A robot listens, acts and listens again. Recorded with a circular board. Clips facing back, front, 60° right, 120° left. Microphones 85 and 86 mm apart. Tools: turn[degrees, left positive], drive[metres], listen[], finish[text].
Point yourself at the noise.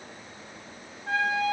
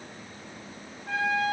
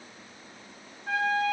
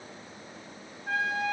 Thought: The trumpet: 160° right.
Action: turn[-160]
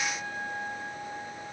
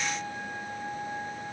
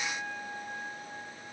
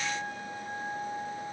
Thought: The trumpet is now 25° left.
Action: turn[25]
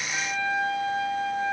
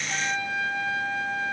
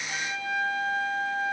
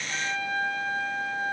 Thought: The trumpet is now 10° right.
Action: turn[-10]
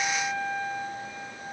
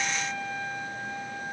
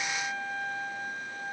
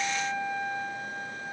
Action: finish[Found it: a trumpet, straight ahead, 1 to 2 m away.]